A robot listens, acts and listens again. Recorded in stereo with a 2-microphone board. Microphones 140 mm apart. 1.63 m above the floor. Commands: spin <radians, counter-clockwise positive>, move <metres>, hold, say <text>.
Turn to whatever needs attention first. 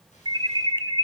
spin -0.61
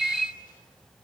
say Facing the alarm.